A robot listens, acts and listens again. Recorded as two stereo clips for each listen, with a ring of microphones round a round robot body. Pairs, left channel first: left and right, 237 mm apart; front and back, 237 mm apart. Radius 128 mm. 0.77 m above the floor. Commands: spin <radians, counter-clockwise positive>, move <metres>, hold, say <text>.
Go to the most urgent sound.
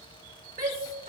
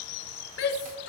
spin -0.61
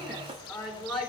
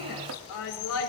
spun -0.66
move 1.0
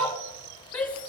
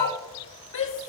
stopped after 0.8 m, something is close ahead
say Blocked. The shout is further on, straight ahead.